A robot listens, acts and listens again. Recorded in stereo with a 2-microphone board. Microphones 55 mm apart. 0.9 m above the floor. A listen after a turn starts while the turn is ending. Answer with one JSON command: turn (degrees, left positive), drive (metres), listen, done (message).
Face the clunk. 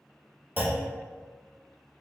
{"turn": -35}
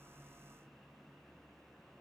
{"listen": true}
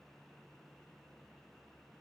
{"done": "I heard a clunk, but can't make it out now. It was about straight ahead or 110° right."}